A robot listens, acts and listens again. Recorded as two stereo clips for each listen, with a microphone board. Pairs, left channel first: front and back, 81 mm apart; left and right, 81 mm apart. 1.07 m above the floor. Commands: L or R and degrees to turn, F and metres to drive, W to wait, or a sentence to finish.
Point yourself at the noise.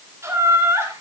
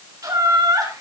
R125
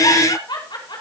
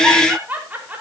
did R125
R20
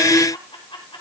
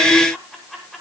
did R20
Facing the laughter, over 4 m away.